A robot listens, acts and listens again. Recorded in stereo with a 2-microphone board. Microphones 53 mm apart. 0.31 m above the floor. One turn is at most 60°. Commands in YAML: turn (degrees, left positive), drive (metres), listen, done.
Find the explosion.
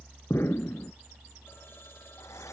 turn: 50
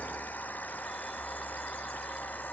listen: true
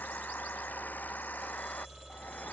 done: "I heard an explosion, but can't make it out now. It was about straight ahead or 80° left."